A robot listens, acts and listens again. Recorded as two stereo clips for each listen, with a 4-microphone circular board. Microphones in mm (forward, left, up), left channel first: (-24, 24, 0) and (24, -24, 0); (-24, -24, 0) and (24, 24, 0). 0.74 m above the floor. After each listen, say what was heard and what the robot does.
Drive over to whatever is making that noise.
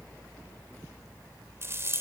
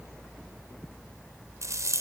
Drive 1.0 m forward.
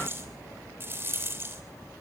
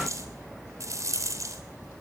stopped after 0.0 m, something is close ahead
The rattle is now 10° left. Turn 10° left.
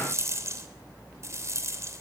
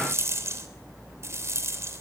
Something is in my way. I am facing the rattle but have not reached it.